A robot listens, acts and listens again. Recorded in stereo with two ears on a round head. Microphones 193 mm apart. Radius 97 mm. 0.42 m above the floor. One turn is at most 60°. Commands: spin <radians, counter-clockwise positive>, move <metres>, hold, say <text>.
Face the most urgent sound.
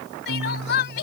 spin 0.87
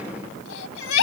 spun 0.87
spin 1.05
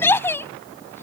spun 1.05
spin 0.17
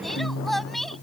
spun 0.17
say Facing the crying.